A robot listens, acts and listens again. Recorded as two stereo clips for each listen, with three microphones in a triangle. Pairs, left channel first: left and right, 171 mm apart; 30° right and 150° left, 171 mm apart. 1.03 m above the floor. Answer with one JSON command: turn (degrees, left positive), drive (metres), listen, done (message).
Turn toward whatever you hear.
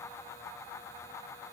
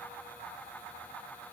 {"listen": true}
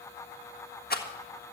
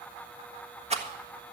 {"turn": 105}
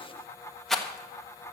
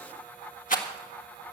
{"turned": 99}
{"done": "Facing the rattle."}